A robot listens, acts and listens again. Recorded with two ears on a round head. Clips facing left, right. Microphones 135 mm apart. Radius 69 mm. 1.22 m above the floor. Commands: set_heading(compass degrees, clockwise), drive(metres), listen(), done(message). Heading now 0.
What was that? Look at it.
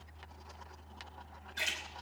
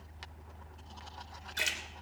set_heading(70)
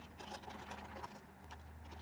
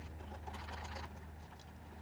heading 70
listen()
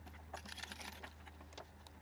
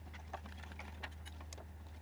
done("I heard a splash, but can't make it out now. It was about straight ahead or 40° right.")